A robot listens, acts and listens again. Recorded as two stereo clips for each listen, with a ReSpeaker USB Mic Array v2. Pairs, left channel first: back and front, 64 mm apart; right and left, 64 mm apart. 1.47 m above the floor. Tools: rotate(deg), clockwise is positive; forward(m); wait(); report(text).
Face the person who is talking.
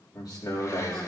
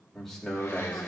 rotate(175)
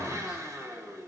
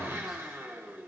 wait()
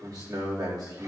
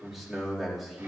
report("Found it: a man speaking, straight ahead.")